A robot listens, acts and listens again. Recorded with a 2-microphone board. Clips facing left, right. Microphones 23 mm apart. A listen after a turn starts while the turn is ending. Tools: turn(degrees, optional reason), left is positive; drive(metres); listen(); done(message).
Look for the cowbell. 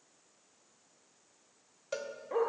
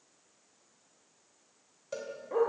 turn(degrees=25, reason="The cowbell: about 25° left or 155° left.")
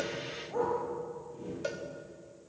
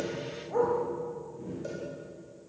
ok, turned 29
turn(degrees=125, reason="So it is at 125° left.")
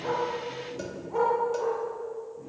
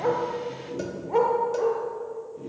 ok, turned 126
listen()
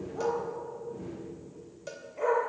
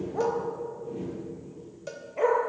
done("Found it: a cowbell, straight ahead, 2 to 4 m away.")